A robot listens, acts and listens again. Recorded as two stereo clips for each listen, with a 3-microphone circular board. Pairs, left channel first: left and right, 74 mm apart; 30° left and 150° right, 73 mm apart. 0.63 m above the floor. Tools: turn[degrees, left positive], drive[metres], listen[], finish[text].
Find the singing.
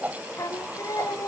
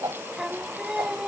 Thought: The singing: 125° left.
Action: turn[125]
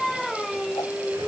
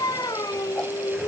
Action: finish[Facing the singing.]